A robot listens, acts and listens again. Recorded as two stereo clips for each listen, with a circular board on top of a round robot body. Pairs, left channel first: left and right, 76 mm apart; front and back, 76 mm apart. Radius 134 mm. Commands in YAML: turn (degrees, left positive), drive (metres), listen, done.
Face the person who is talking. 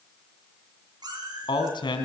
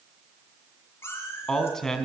turn: 85
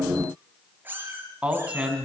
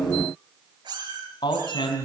turn: -15
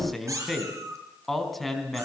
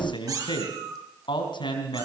done: "Found it: a man speaking, straight ahead."